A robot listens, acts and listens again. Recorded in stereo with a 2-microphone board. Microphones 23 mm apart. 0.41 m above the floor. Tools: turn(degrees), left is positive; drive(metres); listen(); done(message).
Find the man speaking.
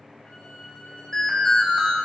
listen()
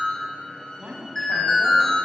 turn(degrees=-50)
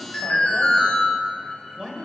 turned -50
turn(degrees=-25)
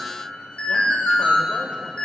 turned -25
listen()
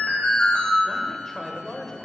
turn(degrees=10)
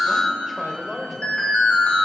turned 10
done("Found it: a man speaking, straight ahead, 1 to 2 m away.")